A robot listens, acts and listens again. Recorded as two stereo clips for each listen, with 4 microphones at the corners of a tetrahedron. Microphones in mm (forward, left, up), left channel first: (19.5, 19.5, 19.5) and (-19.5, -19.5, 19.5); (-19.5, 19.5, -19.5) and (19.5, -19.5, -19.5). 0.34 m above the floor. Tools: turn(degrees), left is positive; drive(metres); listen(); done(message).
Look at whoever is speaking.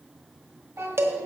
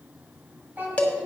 turn(degrees=-100)
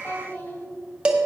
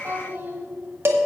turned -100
done("Found it: a child speaking, straight ahead, 2 to 4 m away.")